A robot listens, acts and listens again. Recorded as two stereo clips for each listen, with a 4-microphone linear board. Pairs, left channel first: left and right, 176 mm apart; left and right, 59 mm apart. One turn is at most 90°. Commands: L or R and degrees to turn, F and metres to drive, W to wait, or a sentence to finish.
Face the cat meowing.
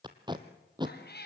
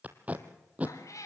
L65
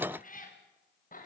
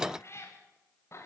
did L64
L50
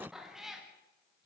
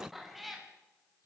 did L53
Found it: a cat meowing, straight ahead, over 4 m away.